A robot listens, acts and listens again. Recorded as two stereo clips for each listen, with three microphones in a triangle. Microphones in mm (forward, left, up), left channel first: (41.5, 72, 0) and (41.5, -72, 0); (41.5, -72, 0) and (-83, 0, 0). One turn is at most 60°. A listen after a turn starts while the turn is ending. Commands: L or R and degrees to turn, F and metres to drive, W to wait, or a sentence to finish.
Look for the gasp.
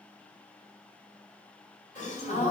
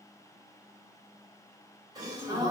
L60
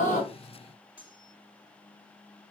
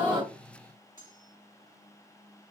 L35
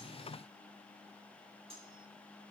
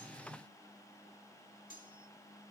Facing where the gasp came from. I can't hear it now.